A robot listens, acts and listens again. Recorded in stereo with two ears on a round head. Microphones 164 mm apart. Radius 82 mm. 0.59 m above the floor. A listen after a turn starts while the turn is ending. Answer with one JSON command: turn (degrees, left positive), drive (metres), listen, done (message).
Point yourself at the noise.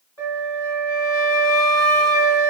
{"turn": 15}
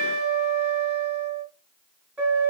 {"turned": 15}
{"done": "Found it: a flute, straight ahead, 1 to 2 m away."}